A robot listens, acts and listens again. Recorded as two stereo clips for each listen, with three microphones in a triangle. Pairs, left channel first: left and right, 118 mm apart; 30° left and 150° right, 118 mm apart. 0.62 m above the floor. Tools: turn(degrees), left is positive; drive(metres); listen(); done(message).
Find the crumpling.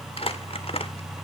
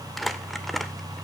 turn(degrees=120)
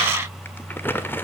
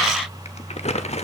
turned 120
turn(degrees=20)
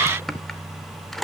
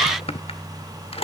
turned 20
done("Found it: crumpling, straight ahead, 1 to 2 m away.")